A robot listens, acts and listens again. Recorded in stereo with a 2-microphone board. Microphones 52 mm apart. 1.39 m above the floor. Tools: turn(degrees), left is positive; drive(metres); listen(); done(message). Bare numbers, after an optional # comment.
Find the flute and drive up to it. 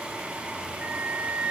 # The flute: about 25° right or 155° right.
turn(-25)
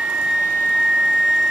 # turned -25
drive(1.0)
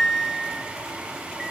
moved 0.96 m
drive(1.0)
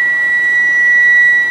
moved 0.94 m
drive(1.0)
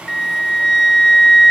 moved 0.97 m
drive(1.0)
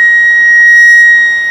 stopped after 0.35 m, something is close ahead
done("Arrived at the flute, straight ahead.")